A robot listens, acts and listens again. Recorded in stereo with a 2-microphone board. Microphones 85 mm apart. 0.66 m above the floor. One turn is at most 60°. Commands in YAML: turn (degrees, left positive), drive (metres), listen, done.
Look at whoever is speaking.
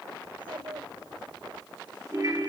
turn: -60
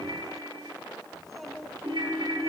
done: "Found it: a child speaking, straight ahead, 2 to 4 m away."